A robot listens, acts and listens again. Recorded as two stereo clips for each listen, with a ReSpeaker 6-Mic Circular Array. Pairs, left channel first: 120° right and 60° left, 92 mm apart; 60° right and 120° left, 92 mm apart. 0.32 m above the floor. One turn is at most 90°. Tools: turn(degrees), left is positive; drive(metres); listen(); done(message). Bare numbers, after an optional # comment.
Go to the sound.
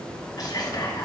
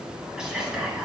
# The whispering: 160° right.
turn(-90)
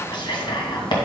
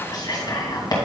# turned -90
# The whispering is now 95° right.
turn(-90)
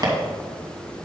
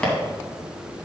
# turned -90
# The whispering is now 15° left.
turn(15)
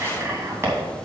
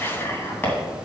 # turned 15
drive(1.0)
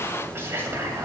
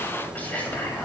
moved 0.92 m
drive(1.0)
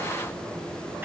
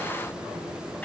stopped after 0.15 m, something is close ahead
listen()
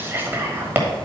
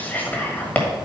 done("I am next to the whispering.")